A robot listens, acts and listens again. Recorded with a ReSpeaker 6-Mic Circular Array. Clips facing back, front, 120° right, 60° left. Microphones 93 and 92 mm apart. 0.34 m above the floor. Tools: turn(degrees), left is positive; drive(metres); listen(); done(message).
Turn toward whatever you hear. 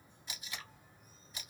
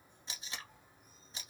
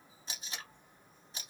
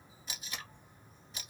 turn(degrees=-60)
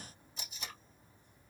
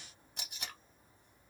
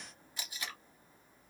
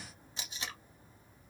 done("Found it: tape being pulled, straight ahead.")